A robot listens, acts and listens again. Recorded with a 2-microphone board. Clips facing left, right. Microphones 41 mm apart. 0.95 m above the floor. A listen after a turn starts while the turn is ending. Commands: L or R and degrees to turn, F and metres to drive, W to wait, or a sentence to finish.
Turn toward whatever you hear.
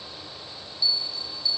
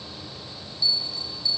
L15
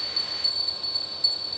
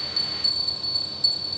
L145
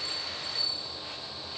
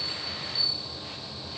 L55
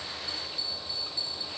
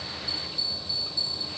L25
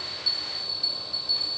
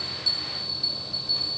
W
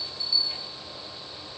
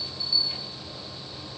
R15
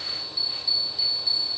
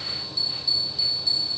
Facing the bell.